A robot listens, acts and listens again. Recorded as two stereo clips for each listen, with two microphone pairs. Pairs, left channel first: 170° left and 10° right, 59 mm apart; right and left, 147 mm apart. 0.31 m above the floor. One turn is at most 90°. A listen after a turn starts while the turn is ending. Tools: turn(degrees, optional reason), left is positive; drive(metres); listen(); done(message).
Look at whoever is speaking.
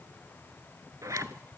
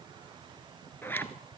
listen()
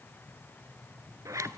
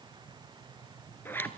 listen()
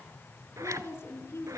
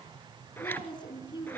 turn(degrees=-90, reason="The woman speaking: 145° right.")
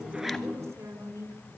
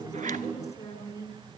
turn(degrees=-30, reason="The woman speaking is now 30° right.")
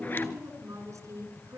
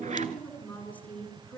turn(degrees=-15, reason="The woman speaking is now 15° right.")
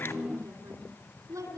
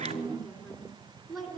done("Found it: a woman speaking, straight ahead, 2 to 4 m away.")